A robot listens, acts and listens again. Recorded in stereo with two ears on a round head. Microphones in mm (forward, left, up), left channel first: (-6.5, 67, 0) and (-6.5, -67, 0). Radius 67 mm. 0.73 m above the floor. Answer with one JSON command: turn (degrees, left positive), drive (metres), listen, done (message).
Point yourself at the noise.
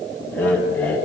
{"turn": 30}
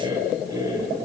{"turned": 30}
{"turn": -20}
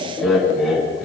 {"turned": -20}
{"done": "Facing the laughter, over 4 m away."}